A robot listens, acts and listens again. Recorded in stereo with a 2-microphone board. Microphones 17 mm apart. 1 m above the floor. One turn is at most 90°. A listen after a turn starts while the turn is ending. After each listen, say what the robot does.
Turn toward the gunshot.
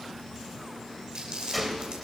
Turn 30° right.
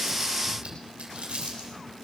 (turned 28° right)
Keep listening.
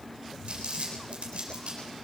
I heard a gunshot, but can't make it out now. It was about 25° left or 150° right.